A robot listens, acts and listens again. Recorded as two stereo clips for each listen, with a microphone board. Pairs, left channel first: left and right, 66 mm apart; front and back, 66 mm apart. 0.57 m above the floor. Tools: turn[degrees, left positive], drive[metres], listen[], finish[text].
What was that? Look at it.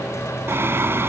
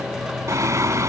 Thought: The singing: 140° right.
Action: turn[-140]
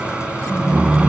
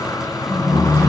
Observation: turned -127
Thought: The singing is now 15° right.
Action: turn[-15]
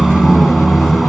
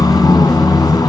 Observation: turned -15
Action: finish[Found it: singing, straight ahead.]